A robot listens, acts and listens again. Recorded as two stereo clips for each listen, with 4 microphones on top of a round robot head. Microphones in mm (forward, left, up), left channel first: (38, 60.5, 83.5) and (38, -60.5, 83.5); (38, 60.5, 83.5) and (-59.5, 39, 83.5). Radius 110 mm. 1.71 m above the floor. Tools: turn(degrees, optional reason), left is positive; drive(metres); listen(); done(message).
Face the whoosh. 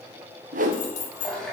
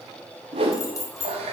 turn(degrees=-120, reason="The whoosh: 120° right.")
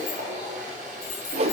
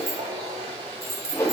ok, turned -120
turn(degrees=-55, reason="The whoosh is now 55° right.")
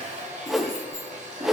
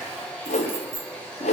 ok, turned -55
done("Facing the whoosh, 1 to 2 m away.")